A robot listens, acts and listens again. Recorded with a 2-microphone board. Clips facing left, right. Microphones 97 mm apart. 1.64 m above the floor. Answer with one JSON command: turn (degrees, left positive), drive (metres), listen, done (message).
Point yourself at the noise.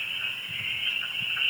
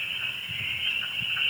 {"listen": true}
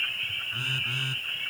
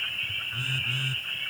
{"turn": 20}
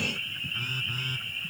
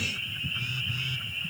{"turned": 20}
{"turn": 145}
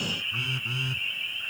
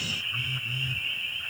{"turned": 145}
{"turn": 70}
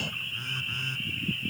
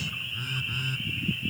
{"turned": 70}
{"done": "Facing the phone buzzing."}